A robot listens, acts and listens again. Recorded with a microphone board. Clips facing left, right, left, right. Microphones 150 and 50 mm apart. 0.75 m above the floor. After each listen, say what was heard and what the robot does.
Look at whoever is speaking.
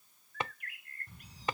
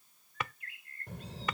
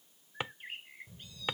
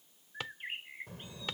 The child speaking: about 70° right or 110° right. Turn 70° right.
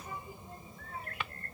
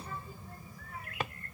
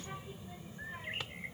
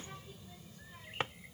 So it is at 35° left. Turn 35° left.
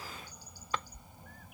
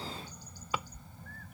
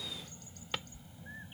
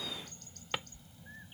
The child speaking is now 15° left. Turn 15° left.
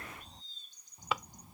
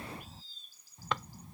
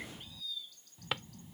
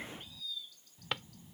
The child speaking is now 10° left. Turn 10° left.
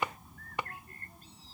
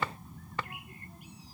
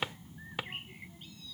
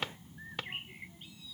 Facing the child speaking.